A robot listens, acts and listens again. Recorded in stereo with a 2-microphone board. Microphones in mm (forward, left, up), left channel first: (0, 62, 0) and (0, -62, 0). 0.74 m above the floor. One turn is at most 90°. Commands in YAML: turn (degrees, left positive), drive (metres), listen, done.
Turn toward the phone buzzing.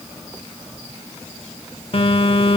turn: 50
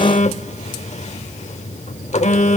turn: 75
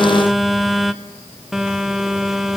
done: "Found it: a phone buzzing, straight ahead."